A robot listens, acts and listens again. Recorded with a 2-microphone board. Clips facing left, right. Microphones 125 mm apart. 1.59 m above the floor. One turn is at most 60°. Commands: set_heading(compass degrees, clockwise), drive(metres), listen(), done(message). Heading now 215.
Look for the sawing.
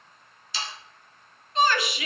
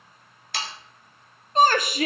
set_heading(275)
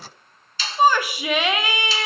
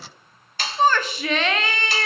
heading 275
set_heading(335)
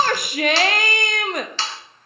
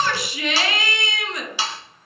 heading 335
set_heading(345)
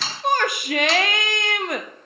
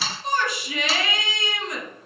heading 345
done("Facing the sawing, 1 to 2 m away.")